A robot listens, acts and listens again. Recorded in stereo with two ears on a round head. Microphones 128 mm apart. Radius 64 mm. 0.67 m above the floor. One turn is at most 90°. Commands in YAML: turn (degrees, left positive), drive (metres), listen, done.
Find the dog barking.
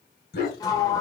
turn: 70
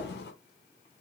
listen: true
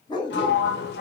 turn: 35
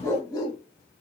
turn: 30
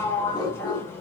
turn: 30
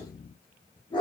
turn: 35
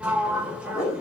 turn: 20
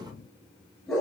done: "Found it: a dog barking, straight ahead."